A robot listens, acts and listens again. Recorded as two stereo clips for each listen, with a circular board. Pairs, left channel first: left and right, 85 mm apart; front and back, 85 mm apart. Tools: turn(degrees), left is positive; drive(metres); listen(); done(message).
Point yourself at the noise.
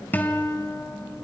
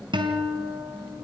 turn(degrees=160)
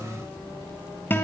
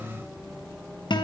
turn(degrees=25)
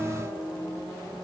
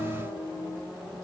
done("Found it: a guitar, straight ahead.")